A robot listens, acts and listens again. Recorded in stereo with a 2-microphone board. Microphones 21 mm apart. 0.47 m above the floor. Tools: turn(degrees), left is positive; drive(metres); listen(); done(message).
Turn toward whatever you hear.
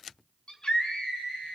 turn(degrees=45)
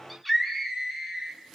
done("Found it: a scream, straight ahead, 2 to 4 m away.")